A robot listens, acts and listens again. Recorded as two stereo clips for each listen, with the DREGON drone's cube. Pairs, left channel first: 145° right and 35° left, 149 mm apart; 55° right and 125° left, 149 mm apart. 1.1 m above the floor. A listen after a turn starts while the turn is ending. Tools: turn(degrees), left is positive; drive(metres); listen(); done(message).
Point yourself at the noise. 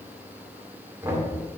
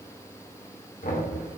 turn(degrees=-40)
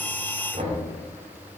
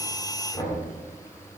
done("Facing the knocking.")